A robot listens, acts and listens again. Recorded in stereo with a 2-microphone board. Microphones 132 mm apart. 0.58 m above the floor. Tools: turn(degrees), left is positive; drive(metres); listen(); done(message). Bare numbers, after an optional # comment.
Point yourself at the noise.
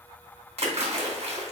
# The splash: about 55° right or 125° right.
turn(-55)
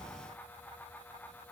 listen()
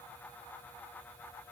done("I heard a splash, but can't make it out now. It was about straight ahead or 70° right.")